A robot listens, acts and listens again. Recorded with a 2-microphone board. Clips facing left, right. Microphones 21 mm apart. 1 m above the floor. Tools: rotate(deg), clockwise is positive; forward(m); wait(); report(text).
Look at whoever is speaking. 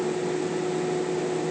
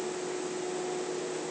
wait()
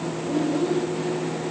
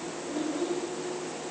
rotate(-25)
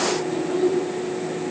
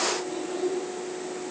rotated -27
rotate(-35)
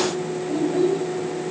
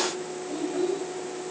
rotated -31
rotate(-135)
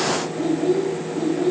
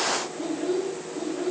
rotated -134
rotate(-10)
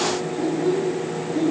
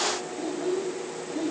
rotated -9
report("Facing the child speaking, 2 to 4 m away.")